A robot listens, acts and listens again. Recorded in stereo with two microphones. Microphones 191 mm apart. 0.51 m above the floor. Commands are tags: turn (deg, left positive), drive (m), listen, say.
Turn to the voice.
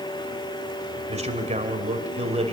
<turn deg="-35"/>
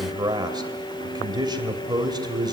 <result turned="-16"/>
<turn deg="-25"/>
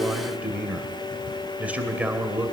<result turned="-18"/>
<turn deg="-10"/>
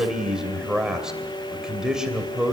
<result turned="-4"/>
<say>Found it: a man speaking, straight ahead.</say>